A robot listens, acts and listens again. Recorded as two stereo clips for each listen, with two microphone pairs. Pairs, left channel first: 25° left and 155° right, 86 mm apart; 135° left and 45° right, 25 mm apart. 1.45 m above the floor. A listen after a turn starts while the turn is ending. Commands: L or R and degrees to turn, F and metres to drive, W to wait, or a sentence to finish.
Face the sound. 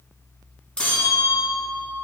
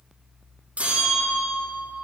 R55
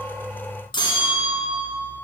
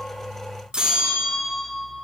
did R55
Found it: a bell, straight ahead, 2 to 4 m away.